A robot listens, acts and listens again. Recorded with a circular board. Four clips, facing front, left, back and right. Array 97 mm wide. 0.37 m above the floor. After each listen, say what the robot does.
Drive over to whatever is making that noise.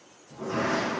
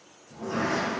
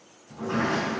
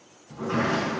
Turn 115° right.
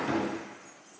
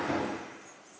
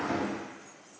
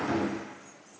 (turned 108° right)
Drive 1.0 m forward.
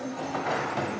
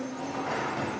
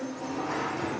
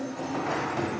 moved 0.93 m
Turn 10° right.
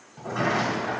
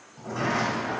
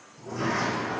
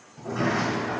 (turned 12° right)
Drive 1.0 m forward.
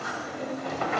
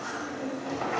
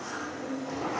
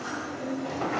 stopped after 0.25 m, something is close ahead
Arrived at the sliding door, straight ahead.